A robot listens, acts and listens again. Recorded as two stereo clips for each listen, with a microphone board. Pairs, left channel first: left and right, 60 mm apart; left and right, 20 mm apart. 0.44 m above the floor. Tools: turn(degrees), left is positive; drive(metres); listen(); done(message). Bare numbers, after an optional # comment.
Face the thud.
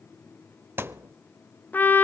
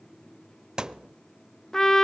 # The thud: about 40° right or 140° right.
turn(-40)
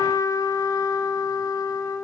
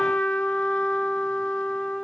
listen()
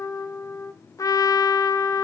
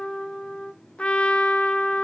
done("I heard a thud, but can't make it out now. It was about straight ahead or 100° right.")